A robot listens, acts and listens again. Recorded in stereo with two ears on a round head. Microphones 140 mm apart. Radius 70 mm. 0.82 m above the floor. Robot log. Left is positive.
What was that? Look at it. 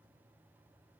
cmd idle
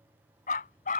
note: The dog barking: about 55° left or 125° left.
cmd yaw +55
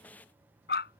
note: So it is at 70° left.
cmd yaw +70
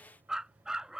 end: Found it: a dog barking, straight ahead.